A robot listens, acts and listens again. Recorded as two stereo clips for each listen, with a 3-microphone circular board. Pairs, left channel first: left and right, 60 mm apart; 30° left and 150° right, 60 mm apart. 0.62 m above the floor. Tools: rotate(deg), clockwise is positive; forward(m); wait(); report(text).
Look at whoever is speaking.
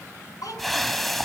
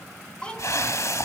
rotate(-105)
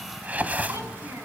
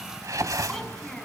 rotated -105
wait()
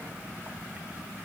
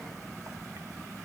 rotate(50)
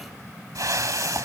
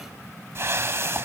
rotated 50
wait()
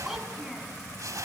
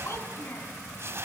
report("Found it: a child speaking, straight ahead.")